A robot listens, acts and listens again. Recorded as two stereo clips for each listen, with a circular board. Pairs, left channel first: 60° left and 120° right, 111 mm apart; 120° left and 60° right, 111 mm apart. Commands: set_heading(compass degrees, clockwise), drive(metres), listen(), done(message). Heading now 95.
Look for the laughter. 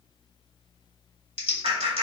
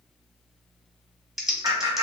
set_heading(205)
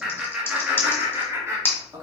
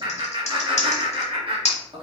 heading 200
set_heading(265)
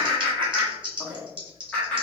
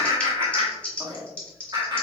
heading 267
set_heading(282)
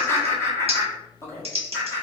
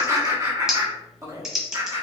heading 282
done("Facing the laughter.")